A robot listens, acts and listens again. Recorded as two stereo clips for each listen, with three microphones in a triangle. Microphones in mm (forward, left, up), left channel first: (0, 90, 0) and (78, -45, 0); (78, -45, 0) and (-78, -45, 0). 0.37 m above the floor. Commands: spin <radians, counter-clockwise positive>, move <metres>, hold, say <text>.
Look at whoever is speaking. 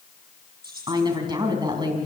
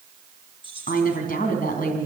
say Found it: a woman speaking, straight ahead, 2 to 4 m away.